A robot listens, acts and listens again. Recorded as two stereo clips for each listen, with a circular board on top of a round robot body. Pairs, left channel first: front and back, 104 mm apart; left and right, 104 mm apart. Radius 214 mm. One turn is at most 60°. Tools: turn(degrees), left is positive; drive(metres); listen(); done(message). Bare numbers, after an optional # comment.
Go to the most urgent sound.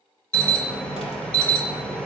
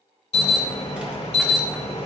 # The alarm: 80° left.
turn(60)
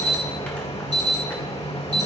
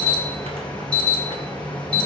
# The alarm is now 15° left.
turn(15)
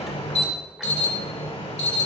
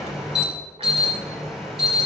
drive(1.0)
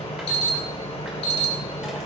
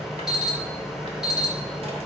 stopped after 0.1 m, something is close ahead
done("Something is in my way. I am facing the alarm but have not reached it.")